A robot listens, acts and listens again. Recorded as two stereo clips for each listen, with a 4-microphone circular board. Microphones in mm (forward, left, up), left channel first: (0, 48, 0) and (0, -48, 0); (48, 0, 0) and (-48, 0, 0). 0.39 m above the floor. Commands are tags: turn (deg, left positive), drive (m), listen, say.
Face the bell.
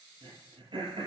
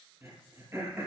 <listen/>
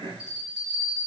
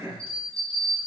<say>Found it: a bell, straight ahead.</say>